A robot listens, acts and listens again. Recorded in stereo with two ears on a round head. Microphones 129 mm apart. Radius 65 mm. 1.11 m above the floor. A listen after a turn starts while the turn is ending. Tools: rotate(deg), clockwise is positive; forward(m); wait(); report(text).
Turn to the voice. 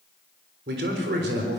rotate(90)
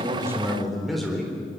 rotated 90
report("Found it: a man speaking, straight ahead, 2 to 4 m away.")